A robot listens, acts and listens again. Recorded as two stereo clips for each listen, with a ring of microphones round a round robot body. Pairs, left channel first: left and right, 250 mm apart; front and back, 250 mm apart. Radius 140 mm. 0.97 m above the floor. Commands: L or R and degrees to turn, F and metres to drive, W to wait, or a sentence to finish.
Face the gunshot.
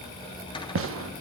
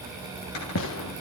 R50
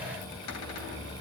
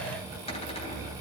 Facing where the gunshot came from. I can't hear it now.